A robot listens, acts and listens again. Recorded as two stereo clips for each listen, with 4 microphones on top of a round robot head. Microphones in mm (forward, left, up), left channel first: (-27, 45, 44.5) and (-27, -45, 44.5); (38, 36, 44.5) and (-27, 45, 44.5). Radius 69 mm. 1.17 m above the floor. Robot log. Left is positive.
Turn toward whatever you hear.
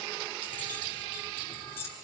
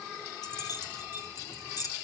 note: The keys jangling: 25° left.
cmd yaw +25
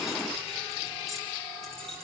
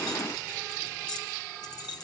end: Found it: keys jangling, straight ahead.